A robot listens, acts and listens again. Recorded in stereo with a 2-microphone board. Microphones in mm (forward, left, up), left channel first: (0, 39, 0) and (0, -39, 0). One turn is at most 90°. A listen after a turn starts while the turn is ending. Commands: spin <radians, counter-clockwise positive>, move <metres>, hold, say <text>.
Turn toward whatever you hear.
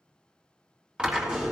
spin -0.52
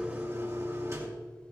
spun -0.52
spin -1.57
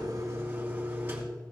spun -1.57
spin -0.44
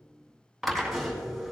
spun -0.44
say Facing the drill, 2 to 4 m away.